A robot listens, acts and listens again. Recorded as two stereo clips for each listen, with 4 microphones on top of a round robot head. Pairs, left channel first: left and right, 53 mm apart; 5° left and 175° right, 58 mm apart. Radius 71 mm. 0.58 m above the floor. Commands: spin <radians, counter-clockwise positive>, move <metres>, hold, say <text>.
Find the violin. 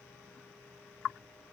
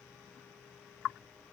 hold
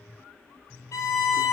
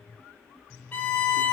spin 1.13
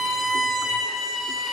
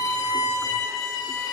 say Found it: a violin, straight ahead.